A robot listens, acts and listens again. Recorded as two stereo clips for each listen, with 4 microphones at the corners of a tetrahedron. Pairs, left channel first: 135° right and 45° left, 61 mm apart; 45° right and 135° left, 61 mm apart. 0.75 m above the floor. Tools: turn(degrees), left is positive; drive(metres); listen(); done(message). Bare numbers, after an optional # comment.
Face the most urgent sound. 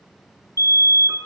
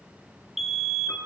# The fire alarm: 140° right.
turn(-140)
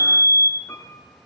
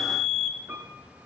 # The fire alarm is now 35° left.
turn(35)
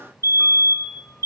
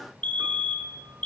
# The fire alarm is now 20° left.
turn(20)
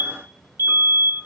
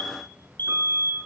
done("Facing the fire alarm, 2 to 4 m away.")